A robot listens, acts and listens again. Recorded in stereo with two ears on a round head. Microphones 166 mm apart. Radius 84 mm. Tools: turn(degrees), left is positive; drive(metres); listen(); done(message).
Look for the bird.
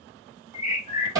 turn(degrees=35)
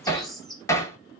done("Found it: a bird, straight ahead, under 1 m away.")